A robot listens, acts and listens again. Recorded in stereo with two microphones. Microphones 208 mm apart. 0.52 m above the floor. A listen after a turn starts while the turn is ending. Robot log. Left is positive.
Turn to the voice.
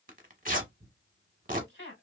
note: The woman speaking: about 65° left or 115° left.
cmd yaw +65
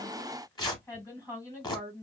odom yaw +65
note: So it is at 15° left.
cmd yaw +15
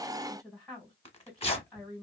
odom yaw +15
end: Facing the woman speaking, 1 to 2 m away.